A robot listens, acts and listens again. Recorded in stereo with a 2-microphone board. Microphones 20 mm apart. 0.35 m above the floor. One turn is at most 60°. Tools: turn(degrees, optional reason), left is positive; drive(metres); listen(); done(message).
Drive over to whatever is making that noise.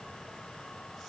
listen()
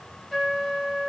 turn(degrees=30)
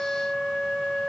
turn(degrees=60, reason="So it is at 145° left.")
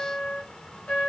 turn(degrees=60, reason="The trumpet is now 100° left.")
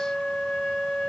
turn(degrees=45, reason="The trumpet is now 45° left.")
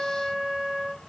turn(degrees=10, reason="The trumpet is now 10° left.")
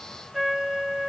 drive(metres=1.0)
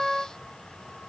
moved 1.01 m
drive(metres=1.0)
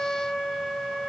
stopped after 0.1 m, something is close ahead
done("Arrived at the trumpet, straight ahead.")